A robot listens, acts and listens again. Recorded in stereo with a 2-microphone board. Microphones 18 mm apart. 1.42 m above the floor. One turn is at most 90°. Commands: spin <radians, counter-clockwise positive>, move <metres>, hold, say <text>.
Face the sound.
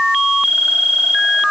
hold
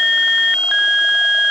hold
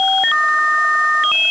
say I can't make out anything.